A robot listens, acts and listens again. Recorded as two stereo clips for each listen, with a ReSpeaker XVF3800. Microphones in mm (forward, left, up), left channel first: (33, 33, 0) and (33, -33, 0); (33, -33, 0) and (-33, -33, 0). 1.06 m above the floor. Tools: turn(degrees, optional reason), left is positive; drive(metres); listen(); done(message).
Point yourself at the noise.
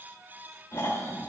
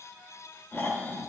turn(degrees=55, reason="The snoring: 55° left.")
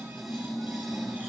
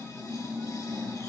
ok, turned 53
done("Found it: snoring, straight ahead, 2 to 4 m away.")